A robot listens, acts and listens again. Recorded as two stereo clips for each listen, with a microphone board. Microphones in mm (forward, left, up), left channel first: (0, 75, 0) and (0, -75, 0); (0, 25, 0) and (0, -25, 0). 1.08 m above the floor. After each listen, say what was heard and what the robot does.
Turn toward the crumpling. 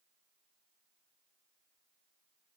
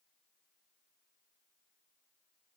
Keep listening.
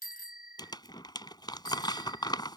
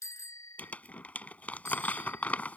The crumpling: about 30° left or 150° left. Turn 30° left.
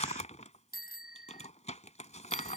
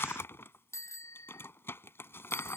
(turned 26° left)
So it is at 120° left. Turn 120° left.
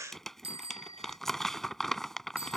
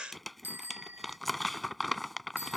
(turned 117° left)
Found it: crumpling, straight ahead.